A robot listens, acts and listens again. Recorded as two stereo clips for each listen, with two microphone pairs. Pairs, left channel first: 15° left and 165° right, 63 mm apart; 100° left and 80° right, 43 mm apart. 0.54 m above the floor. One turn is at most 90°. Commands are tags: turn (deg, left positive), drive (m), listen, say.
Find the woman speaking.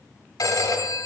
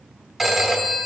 <listen/>
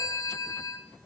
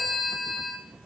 <listen/>
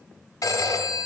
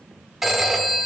<say>I can't make out a woman speaking, only a phone ringing.</say>